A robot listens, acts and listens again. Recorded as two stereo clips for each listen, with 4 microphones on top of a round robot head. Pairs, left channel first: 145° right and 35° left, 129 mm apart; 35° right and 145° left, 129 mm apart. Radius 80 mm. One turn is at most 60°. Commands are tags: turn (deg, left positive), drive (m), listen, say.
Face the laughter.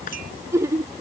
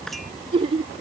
<turn deg="60"/>
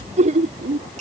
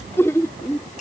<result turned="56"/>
<turn deg="30"/>
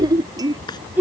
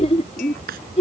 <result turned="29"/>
<turn deg="-40"/>
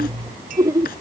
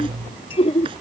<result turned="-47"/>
<turn deg="-25"/>
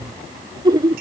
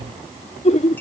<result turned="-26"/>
<turn deg="-25"/>
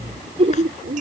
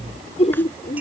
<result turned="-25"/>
<turn deg="-10"/>
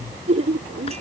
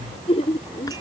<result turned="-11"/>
<say>Found it: laughter, straight ahead.</say>